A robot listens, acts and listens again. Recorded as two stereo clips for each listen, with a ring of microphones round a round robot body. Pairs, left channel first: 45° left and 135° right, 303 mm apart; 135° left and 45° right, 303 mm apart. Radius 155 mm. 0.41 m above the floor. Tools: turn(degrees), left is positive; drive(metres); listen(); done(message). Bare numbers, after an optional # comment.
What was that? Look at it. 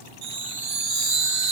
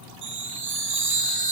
# The chime: 100° right.
turn(-100)
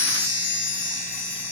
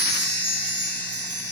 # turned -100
done("Facing the chime.")